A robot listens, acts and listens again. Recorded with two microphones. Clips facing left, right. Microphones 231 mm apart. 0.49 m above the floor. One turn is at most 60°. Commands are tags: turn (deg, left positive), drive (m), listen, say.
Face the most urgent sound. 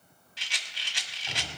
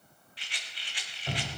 <listen/>
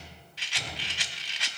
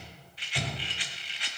<listen/>
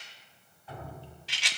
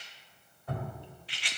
<say>I can't make out anything urgent, only dripping and a rattle.</say>